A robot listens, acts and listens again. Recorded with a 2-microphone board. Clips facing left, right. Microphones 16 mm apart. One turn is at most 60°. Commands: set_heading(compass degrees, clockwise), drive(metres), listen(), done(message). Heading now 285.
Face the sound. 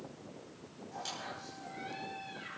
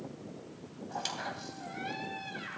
set_heading(330)
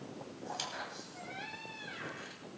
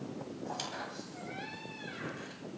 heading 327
done("Facing the squeak.")